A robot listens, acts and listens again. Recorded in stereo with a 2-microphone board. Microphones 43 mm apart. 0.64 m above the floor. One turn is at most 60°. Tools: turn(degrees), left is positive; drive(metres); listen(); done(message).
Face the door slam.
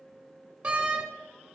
turn(degrees=-30)
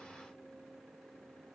listen()
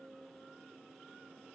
done("I heard a door slam, but can't make it out now. It was about straight ahead or 120° right.")